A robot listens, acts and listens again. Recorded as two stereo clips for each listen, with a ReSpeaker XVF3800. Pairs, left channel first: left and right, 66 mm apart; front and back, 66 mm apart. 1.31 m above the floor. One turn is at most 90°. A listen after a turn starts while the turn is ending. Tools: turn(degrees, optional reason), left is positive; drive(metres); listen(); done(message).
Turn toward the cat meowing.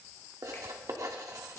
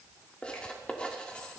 listen()
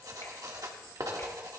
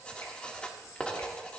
listen()
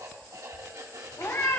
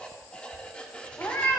turn(degrees=50, reason="The cat meowing: 50° left.")
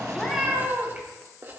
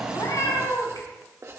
turn(degrees=-20, reason="The cat meowing is now 20° right.")
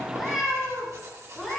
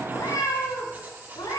done("Found it: a cat meowing, straight ahead, over 4 m away.")